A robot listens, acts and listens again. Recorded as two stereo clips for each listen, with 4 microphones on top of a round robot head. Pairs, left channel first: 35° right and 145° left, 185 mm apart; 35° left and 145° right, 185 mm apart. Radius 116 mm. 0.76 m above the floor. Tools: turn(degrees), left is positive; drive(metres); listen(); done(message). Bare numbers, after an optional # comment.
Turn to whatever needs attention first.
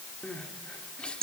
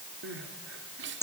# The crying: 120° right.
turn(-120)
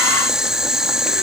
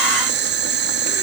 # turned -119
listen()
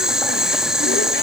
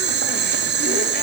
listen()
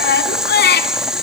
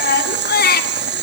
done("Found it: crying, straight ahead, 2 to 4 m away.")